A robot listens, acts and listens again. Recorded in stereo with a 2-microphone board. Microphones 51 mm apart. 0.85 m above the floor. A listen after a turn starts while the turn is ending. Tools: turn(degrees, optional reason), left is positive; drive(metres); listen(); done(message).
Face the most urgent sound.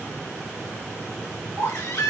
turn(degrees=90)
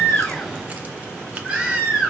turn(degrees=-15, reason="So it is at 15° right.")
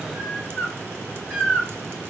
done("Facing the baby crying.")